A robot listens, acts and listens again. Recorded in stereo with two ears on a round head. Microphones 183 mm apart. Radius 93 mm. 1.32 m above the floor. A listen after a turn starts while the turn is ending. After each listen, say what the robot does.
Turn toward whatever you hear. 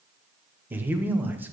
Turn 30° right.
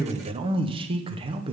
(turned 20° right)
Turn 150° right.
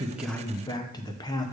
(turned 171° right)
Turn 20° left.
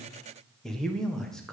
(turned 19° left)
Facing the man speaking.